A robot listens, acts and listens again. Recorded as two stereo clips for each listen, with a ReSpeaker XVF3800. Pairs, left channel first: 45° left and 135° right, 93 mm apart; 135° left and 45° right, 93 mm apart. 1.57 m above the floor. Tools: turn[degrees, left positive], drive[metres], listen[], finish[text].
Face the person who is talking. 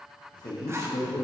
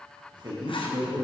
Action: finish[Found it: a man speaking, straight ahead, 1 to 2 m away.]